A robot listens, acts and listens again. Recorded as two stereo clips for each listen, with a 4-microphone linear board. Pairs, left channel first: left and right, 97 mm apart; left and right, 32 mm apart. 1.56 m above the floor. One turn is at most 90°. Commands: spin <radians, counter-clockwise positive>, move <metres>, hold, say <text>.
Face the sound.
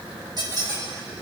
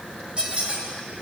spin -0.70
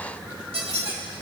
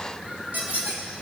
spin -1.57
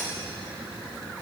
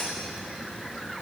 hold
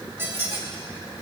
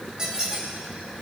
spin -0.44
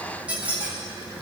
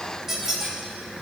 spin -0.26
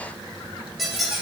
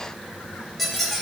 say Facing the squeak, 2 to 4 m away.